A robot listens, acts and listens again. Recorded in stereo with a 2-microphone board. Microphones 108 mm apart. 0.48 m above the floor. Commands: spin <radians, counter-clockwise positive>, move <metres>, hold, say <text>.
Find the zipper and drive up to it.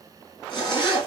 spin 0.70
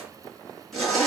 move 1.0
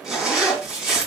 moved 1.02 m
move 1.0
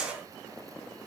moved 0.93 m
spin -0.17
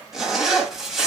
move 1.0
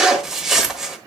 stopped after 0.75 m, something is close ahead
say I am next to the zipper.